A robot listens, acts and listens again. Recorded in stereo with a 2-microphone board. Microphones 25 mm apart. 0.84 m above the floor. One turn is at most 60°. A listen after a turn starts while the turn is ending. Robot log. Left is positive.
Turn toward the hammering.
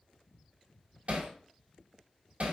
note: The hammering: about 60° right or 120° right.
cmd yaw -60
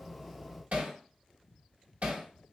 note: So it is at 65° right.
cmd yaw -60
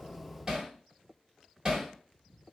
note: The hammering is now 25° right.
cmd yaw -25
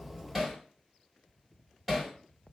end: Facing the hammering, 1 to 2 m away.